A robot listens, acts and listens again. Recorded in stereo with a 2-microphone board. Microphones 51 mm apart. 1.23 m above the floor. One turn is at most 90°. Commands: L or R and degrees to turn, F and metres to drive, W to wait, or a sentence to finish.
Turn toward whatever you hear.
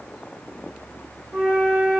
R35
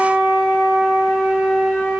Found it: a flute, straight ahead.